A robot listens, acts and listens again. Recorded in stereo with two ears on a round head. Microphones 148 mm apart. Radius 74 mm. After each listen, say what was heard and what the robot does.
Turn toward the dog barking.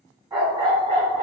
The dog barking: about 35° right or 145° right. Turn 35° right.
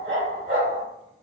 So it is at 105° right. Turn 105° right.
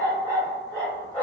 The dog barking is now 25° left. Turn 25° left.
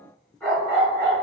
The dog barking is now 15° left. Turn 15° left.
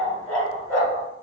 Found it: a dog barking, straight ahead.